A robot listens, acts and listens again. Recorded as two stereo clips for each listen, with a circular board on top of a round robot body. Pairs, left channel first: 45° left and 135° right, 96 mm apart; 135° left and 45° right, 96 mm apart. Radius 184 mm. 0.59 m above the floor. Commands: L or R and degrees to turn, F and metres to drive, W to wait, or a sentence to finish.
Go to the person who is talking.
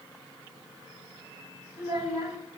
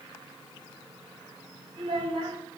R85
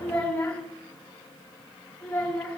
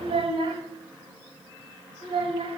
R30
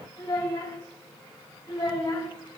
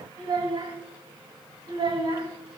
R10
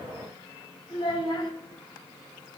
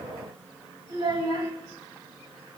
F1.0
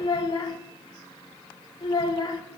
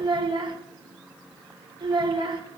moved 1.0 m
F1.0
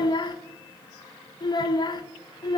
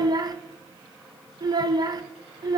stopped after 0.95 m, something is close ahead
I am next to the child speaking.